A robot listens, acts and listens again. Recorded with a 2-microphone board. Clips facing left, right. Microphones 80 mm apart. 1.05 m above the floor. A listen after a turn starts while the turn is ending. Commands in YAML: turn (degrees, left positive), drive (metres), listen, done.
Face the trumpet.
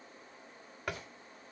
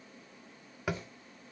listen: true
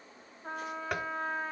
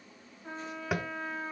turn: 40
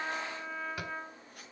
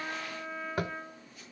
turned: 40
done: "Found it: a trumpet, straight ahead."